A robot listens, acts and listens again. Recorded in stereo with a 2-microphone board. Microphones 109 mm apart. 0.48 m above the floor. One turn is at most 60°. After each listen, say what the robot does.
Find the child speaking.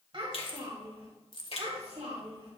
Turn 60° right.
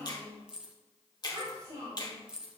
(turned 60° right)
Turn 55° right.
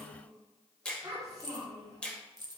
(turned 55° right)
Turn 35° right.
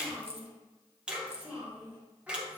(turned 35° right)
Turn 15° right.
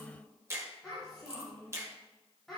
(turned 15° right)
Found it: a child speaking, straight ahead, 2 to 4 m away.